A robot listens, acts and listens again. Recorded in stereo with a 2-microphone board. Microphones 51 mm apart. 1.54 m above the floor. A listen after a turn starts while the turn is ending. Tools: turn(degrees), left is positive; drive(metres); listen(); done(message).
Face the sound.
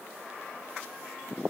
listen()
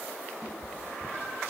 turn(degrees=30)
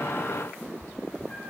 turn(degrees=150)
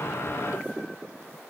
listen()
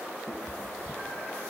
turn(degrees=25)
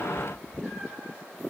turn(degrees=15)
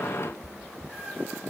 done("Facing the cat meowing.")